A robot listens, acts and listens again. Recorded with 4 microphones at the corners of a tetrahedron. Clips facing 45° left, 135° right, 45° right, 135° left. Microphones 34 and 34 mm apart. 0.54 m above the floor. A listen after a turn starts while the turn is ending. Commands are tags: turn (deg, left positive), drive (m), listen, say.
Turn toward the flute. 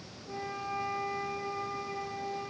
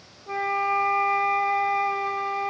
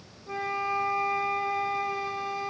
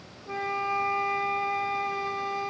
<turn deg="-140"/>
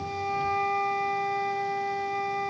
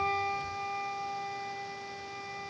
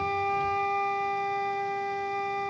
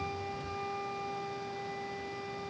<turn deg="-10"/>
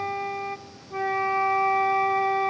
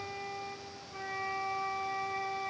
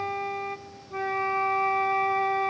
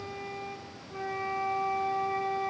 <say>Facing the flute, under 1 m away.</say>